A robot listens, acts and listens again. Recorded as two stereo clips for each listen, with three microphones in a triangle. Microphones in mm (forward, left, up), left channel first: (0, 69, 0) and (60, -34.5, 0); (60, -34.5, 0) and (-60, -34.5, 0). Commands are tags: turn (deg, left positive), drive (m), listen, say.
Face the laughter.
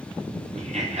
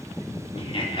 <turn deg="-40"/>
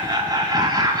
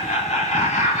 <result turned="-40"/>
<say>Found it: laughter, straight ahead, 2 to 4 m away.</say>